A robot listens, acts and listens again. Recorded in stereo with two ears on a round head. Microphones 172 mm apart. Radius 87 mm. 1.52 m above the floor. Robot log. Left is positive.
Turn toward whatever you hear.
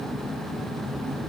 cmd idle
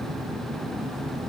cmd idle
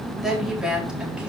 cmd yaw -30
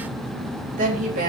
note: So it is at 135° right.
cmd yaw -135
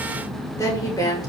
note: The woman speaking is now 20° left.
cmd yaw +20
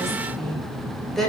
end: Found it: a woman speaking, straight ahead, 2 to 4 m away.